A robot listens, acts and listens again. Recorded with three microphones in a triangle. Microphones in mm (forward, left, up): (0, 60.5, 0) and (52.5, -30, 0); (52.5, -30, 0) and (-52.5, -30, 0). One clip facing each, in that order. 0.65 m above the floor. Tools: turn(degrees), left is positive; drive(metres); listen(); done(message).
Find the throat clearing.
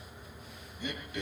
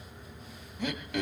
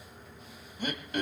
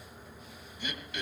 turn(degrees=-45)
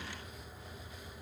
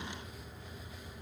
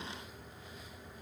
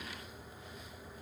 listen()
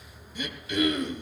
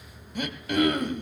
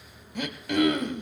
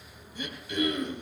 turn(degrees=-20)
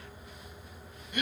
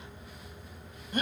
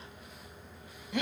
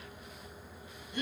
done("Facing the throat clearing.")